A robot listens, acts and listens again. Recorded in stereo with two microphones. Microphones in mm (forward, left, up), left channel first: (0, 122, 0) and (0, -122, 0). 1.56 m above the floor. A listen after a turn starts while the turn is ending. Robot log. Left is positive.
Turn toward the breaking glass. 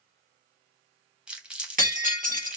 note: The breaking glass: about 35° right or 145° right.
cmd yaw -35
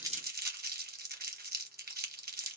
cmd idle
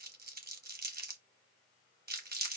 end: I heard breaking glass, but can't make it out now. It was about straight ahead or 110° right.